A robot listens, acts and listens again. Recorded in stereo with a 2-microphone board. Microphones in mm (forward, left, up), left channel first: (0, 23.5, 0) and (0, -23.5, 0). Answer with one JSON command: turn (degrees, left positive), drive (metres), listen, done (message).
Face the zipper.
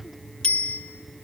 {"listen": true}
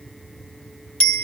{"listen": true}
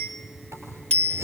{"turn": -70}
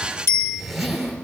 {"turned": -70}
{"done": "Found it: a zipper, straight ahead."}